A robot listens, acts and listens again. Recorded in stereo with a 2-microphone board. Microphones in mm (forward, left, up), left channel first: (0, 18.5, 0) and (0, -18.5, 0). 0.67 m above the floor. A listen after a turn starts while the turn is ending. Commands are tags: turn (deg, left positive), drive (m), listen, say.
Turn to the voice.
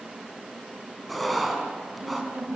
<turn deg="-55"/>
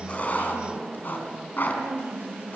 <turn deg="-70"/>
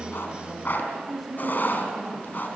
<say>Facing the woman speaking.</say>